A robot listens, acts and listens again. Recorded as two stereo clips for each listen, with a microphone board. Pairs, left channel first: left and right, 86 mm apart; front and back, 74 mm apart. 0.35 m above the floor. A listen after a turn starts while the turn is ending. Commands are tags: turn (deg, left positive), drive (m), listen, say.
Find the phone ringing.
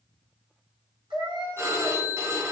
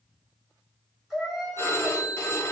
<turn deg="-45"/>
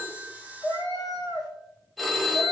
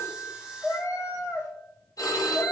<say>Facing the phone ringing, under 1 m away.</say>